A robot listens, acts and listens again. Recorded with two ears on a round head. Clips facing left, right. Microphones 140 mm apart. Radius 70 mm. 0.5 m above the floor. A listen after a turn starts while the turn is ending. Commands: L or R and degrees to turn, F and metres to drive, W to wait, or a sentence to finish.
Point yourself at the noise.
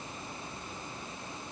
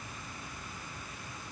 W
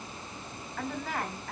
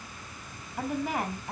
R30
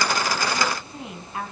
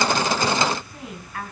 L20
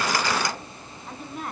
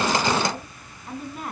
Found it: a woman speaking, straight ahead.